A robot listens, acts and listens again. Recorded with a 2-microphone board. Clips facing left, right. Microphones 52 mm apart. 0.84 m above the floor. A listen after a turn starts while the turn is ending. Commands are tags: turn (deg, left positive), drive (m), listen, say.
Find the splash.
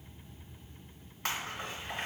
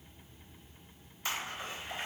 <turn deg="60"/>
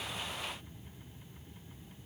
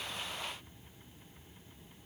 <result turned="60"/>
<listen/>
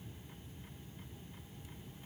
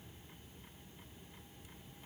<say>I heard a splash, but can't make it out now. It was about straight ahead or 60° left.</say>